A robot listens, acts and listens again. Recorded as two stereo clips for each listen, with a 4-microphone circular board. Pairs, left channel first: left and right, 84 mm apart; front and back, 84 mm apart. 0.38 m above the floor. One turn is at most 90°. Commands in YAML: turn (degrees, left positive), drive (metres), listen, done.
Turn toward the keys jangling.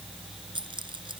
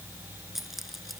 turn: -90
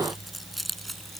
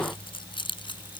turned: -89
done: "Found it: keys jangling, straight ahead."